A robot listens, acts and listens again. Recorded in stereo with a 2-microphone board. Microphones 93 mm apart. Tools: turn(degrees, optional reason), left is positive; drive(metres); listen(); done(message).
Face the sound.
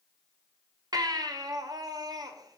turn(degrees=-45, reason="The baby crying: about 45° right or 135° right.")
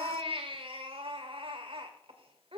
turn(degrees=-90, reason="So it is at 90° right.")
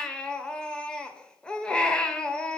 turn(degrees=10, reason="The baby crying is now 10° left.")
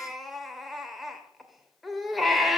done("Found it: a baby crying, straight ahead, 1 to 2 m away.")